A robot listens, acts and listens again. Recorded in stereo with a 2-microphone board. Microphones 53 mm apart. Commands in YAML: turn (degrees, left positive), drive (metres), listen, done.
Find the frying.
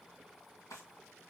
listen: true
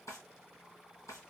listen: true
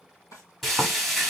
turn: 30
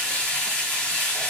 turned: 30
turn: 150
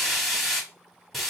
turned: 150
done: "Facing the frying."